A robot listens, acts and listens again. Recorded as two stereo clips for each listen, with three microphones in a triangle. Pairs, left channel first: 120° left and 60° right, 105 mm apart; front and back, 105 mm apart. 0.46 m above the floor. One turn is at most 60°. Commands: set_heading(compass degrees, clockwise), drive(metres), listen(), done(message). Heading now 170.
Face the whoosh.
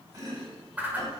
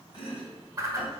set_heading(230)
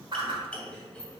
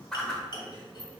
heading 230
set_heading(290)
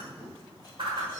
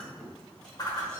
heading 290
set_heading(330)
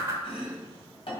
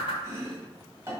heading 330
done("Found it: a whoosh, straight ahead, 1 to 2 m away.")